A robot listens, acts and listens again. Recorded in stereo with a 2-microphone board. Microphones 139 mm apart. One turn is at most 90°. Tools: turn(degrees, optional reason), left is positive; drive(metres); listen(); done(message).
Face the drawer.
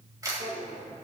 turn(degrees=-90)
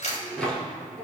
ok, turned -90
done("Facing the drawer, 2 to 4 m away.")